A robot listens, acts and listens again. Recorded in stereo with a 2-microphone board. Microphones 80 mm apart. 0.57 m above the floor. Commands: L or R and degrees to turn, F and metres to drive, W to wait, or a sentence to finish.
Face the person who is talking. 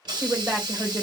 R30
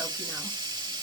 W
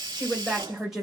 Found it: a woman speaking, straight ahead.